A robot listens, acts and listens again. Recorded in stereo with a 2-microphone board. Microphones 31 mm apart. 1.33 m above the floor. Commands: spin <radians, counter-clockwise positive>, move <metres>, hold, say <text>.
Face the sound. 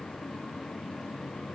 hold
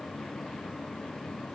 hold
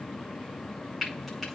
spin 0.52
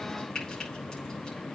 spin 2.62
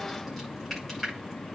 say Found it: frying, straight ahead.